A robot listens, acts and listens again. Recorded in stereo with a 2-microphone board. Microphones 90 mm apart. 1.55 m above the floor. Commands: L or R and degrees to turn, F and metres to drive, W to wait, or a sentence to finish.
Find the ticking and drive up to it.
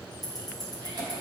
L45
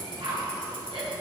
W
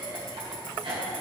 W
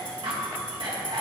I heard ticking, but can't make it out now. It was about straight ahead or 90° left. I did not reach it.